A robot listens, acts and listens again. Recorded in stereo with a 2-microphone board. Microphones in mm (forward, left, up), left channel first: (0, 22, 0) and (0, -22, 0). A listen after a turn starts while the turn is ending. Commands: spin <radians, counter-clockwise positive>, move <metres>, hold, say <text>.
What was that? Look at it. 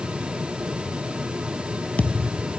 spin 0.52
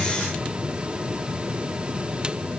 hold
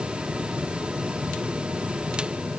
say I heard a thud, but can't make it out now. It was about straight ahead or 120° left.